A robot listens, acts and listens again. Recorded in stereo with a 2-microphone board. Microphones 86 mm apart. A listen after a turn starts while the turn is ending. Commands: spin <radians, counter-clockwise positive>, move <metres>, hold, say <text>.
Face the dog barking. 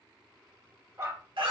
spin -0.61
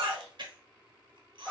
say Found it: a dog barking, straight ahead, 1 to 2 m away.